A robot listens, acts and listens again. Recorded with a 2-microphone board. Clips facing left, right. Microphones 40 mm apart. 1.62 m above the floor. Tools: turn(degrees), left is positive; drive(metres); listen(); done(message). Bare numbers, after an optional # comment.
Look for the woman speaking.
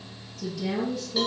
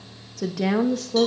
# The woman speaking: about 75° right or 105° right.
turn(-75)
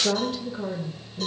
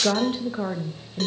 # So it is at 50° right.
turn(-50)
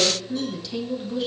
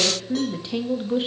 # The woman speaking is now 40° right.
turn(-40)
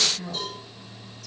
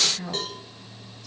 # The woman speaking is now 20° right.
turn(-20)
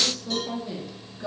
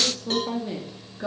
# The woman speaking is now 25° right.
turn(-25)
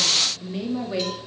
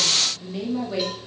# The woman speaking is now 10° left.
turn(10)
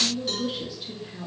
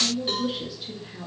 done("Found it: a woman speaking, straight ahead, 2 to 4 m away.")